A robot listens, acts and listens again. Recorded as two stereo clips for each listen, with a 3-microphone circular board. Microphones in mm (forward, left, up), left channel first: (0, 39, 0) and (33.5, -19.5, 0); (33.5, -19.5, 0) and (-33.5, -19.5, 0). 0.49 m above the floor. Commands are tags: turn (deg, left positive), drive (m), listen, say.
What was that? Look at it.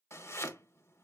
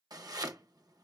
<turn deg="165"/>
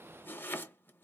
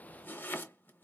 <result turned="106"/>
<turn deg="60"/>
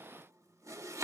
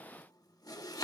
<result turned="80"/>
<turn deg="-20"/>
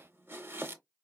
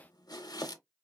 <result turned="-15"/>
<say>Found it: chopping, straight ahead, under 1 m away.</say>